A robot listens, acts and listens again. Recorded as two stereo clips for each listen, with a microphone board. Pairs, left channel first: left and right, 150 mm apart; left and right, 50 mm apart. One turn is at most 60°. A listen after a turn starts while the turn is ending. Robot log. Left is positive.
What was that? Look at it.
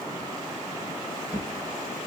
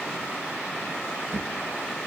note: The drawer: about 50° right or 130° right.
cmd yaw -50
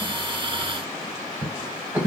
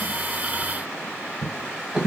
note: So it is at 15° right.
cmd yaw -15
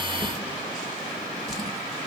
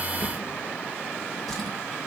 end: Found it: a drawer, straight ahead.